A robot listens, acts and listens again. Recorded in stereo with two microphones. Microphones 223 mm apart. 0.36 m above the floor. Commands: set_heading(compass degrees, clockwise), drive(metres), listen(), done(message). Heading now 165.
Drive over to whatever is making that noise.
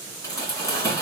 set_heading(135)
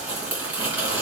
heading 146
drive(1.0)
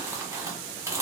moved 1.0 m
set_heading(161)
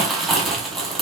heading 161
drive(1.0)
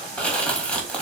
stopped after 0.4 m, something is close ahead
done("I am next to the crumpling.")